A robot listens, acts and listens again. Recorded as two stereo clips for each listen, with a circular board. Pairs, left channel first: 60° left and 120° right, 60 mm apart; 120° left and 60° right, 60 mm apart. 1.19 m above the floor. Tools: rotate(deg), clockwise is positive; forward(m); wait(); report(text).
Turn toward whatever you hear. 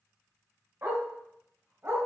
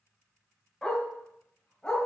rotate(165)
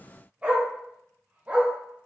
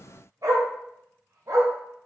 rotate(55)
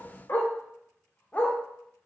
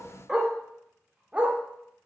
report("Facing the dog barking.")